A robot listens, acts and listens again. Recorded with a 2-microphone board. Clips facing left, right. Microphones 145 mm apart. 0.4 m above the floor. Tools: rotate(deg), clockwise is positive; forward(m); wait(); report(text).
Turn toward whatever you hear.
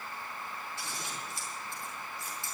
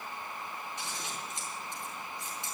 rotate(20)
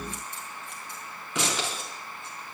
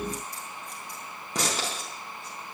rotate(140)
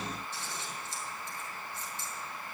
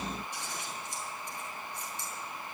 rotate(15)
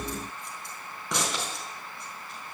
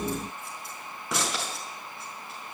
report("Facing the scissors.")